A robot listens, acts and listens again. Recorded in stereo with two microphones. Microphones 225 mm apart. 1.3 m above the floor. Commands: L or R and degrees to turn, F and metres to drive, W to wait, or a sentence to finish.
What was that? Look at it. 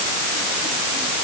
W
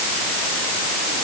W
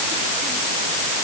I can't make out anything.